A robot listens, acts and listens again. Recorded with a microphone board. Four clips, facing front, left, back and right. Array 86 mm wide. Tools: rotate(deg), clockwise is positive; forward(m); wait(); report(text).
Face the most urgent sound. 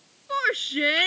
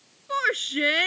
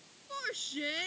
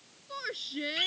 rotate(-45)
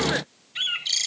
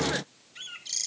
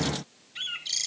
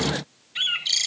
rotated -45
wait()
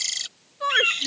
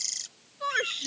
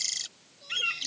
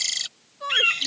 report("Facing the shout.")